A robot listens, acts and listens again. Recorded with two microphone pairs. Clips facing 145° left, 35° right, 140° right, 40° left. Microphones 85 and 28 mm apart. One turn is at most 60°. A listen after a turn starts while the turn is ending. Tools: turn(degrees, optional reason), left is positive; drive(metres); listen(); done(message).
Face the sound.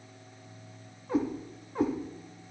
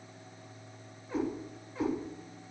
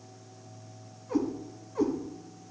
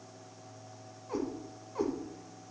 turn(degrees=60, reason="The cat meowing: 110° left.")
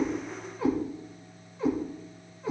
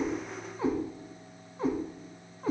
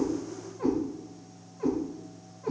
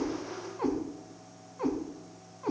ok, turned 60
done("Facing the cat meowing.")